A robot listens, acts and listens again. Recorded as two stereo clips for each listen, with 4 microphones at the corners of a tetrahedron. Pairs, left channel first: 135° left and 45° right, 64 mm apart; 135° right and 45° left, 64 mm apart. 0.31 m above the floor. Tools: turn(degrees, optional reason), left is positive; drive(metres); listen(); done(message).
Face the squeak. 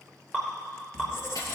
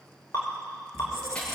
turn(degrees=85, reason="The squeak: 85° left.")
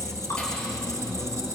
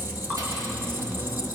done("Facing the squeak.")